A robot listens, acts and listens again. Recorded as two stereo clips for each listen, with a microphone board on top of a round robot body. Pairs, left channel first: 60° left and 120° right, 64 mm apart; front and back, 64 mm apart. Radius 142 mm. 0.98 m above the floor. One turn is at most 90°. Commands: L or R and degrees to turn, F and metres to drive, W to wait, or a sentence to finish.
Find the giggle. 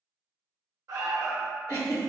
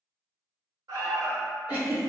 L20
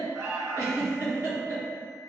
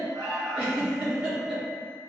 Facing the giggle.